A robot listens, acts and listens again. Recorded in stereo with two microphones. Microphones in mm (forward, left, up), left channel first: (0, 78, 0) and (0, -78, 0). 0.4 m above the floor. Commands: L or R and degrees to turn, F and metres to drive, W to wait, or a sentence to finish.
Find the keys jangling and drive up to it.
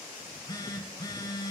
W
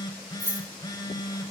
R65
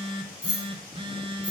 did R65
F1.0
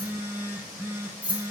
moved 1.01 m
R10
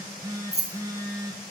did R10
F1.0
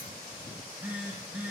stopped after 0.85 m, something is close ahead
W
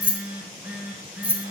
R15
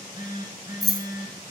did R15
Arrived at the keys jangling, straight ahead.